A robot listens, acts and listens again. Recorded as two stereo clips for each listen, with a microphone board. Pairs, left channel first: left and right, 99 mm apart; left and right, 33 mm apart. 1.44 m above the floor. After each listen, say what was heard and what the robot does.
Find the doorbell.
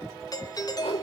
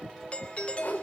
The doorbell: about 40° left or 140° left. Turn 40° left.
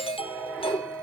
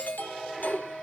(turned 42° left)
So it is at 95° left. Turn 95° left.
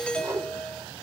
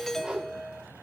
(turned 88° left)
The doorbell is now 10° left. Turn 10° left.
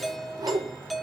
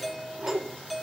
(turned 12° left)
Facing the doorbell, 1 to 2 m away.